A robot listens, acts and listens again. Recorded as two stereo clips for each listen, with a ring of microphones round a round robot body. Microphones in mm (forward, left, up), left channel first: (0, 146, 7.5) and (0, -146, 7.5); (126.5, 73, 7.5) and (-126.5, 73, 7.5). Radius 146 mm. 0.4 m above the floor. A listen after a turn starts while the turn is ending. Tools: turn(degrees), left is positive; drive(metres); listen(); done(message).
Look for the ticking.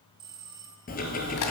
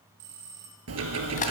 turn(degrees=150)
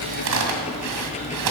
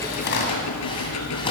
turn(degrees=20)
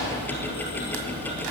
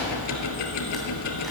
done("Facing the ticking, 1 to 2 m away.")